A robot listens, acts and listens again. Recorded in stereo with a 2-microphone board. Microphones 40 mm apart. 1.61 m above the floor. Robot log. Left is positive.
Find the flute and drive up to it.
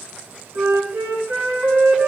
note: The flute: about 70° right or 110° right.
cmd yaw -70
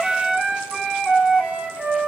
cmd fwd 1.0
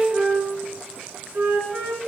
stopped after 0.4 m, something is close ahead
note: The flute is now 10° right.
cmd yaw -10
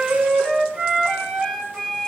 end: Blocked. The flute is further on, straight ahead.